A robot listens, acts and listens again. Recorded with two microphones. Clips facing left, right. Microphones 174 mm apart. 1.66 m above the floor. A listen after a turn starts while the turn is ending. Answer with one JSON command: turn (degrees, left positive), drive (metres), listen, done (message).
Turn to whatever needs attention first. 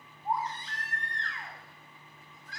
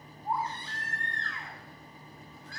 {"turn": 20}
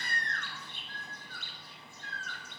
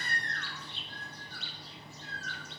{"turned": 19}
{"done": "Found it: a baby crying, straight ahead."}